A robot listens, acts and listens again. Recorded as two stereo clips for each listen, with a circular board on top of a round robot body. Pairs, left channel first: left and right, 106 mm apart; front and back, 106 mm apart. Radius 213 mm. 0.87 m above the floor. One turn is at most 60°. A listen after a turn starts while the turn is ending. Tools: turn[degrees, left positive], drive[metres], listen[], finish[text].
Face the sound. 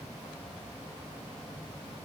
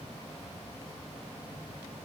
Action: listen[]
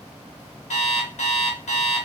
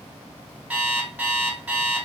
Thought: The alarm clock: 105° left.
Action: turn[60]
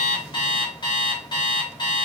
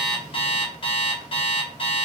Thought: The alarm clock is now 40° left.
Action: turn[40]
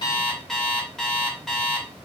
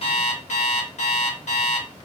Action: finish[Facing the alarm clock, under 1 m away.]